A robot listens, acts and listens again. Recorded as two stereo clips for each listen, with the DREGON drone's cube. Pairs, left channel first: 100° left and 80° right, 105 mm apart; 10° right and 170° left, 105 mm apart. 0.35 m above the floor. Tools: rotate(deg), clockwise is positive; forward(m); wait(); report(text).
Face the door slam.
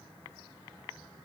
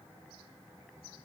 wait()
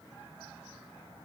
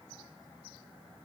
wait()
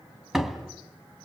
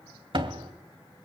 rotate(165)
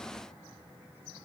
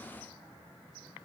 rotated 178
rotate(-10)
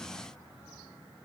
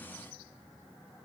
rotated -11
report("I heard a door slam from this way, but can't make it out now.")